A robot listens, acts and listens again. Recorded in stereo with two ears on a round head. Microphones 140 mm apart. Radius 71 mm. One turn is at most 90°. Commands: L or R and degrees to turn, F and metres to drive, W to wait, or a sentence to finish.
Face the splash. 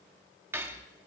W
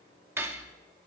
W
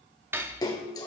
L25
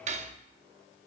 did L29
W
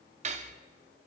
I heard a splash, but can't make it out now. It was about 5° right or 130° left.